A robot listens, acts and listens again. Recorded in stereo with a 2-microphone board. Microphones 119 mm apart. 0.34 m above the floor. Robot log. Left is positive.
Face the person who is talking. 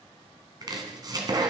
cmd idle
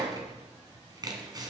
cmd idle
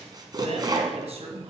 note: The man speaking: about 65° right or 115° right.
cmd yaw -65
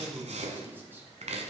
note: So it is at 20° right.
cmd yaw -20
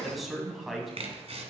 end: Found it: a man speaking, straight ahead.